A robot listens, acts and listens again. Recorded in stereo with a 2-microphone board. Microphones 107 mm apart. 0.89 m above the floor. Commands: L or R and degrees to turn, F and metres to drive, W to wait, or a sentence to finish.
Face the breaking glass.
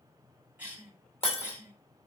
L60
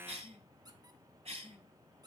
W
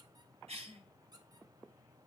I heard breaking glass, but can't make it out now. It was about straight ahead or 60° left.